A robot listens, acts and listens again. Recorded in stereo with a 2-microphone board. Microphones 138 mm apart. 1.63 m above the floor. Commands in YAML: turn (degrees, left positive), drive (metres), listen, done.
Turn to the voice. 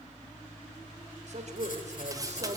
turn: -55
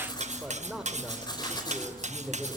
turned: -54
done: "Facing the man speaking, over 4 m away."